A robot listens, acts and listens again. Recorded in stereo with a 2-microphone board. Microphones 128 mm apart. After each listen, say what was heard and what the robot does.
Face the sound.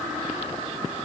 Keep listening.
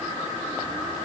Keep listening.
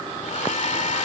The hair dryer: about 65° left or 115° left. Turn 65° left.
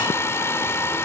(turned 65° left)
So it is at 20° left. Turn 20° left.
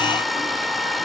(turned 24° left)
Found it: a hair dryer, straight ahead.